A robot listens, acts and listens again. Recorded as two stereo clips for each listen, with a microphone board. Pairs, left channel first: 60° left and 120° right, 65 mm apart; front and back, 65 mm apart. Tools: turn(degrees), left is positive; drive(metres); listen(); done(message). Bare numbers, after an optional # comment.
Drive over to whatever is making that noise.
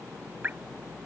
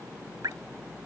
# The dripping: straight behind.
turn(180)
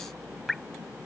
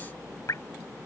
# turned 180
# The dripping is now 30° right.
turn(-30)
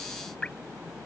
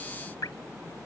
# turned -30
# The dripping is now 10° right.
turn(-10)
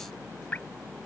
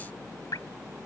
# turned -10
drive(1.0)
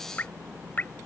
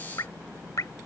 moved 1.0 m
drive(1.0)
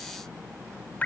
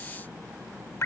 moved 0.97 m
# The dripping is now 10° left.
turn(10)
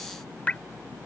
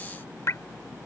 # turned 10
drive(1.0)
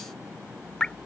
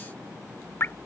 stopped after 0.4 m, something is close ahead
done("Arrived at the dripping, straight ahead.")